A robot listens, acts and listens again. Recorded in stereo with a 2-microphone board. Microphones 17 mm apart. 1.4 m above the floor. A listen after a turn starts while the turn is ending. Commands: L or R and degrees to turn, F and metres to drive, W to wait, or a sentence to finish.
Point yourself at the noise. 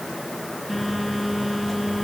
L30
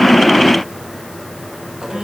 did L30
R35
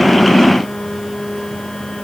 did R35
L20
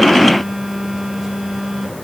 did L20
Found it: a phone buzzing, straight ahead.